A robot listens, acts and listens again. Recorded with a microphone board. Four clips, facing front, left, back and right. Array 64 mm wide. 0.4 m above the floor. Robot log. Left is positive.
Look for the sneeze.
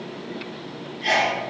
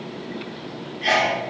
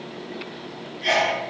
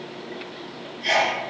note: The sneeze: 95° left.
cmd yaw +95
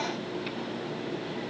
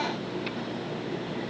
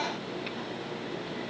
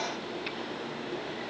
end: Facing where the sneeze came from. I can't hear it now.